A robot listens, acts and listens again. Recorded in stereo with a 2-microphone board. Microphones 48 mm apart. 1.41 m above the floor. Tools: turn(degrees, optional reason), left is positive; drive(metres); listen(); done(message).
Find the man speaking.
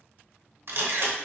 listen()
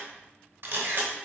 listen()
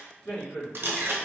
turn(degrees=70, reason="The man speaking: about 70° left or 110° left.")
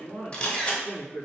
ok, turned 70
turn(degrees=55, reason="So it is at 55° left.")
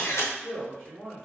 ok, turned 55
turn(degrees=10, reason="The man speaking is now 10° left.")
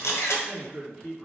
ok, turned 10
done("Facing the man speaking.")